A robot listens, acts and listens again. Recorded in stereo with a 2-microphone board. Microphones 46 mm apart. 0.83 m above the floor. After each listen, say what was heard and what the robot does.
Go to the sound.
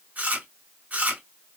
The chewing: about 35° right or 145° right. Turn 35° right.
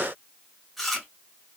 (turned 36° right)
Drive 1.0 m forward.
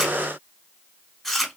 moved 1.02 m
Drive 1.0 m forward.
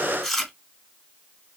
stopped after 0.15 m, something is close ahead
Arrived at the chewing, straight ahead.